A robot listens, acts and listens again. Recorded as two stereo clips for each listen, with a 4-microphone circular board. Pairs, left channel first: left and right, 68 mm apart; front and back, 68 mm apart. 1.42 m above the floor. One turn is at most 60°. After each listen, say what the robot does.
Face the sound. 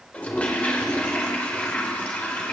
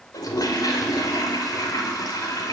Turn 20° left.
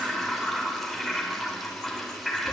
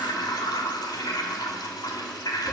Facing the toilet flushing.